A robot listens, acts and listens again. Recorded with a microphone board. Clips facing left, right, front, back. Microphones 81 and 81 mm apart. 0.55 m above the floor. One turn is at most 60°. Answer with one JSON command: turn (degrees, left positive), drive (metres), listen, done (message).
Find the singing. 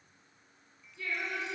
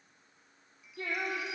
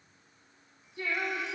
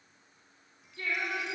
{"turn": -60}
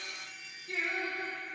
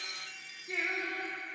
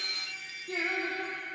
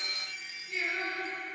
{"turn": -20}
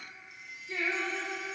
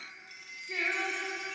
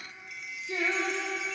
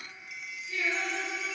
{"done": "Facing the singing."}